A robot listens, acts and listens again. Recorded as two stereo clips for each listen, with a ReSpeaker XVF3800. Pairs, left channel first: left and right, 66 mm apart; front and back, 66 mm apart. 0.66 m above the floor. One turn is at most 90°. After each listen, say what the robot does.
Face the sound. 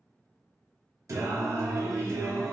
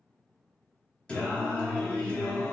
Turn 70° right.
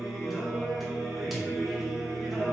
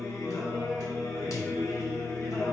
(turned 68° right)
Found it: singing, straight ahead.